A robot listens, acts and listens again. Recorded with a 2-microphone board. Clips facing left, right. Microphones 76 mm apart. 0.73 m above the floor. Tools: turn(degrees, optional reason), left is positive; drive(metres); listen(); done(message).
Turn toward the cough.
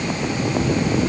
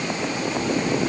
listen()
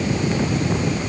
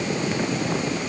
listen()
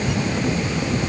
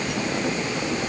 done("I can't make out a cough to turn to.")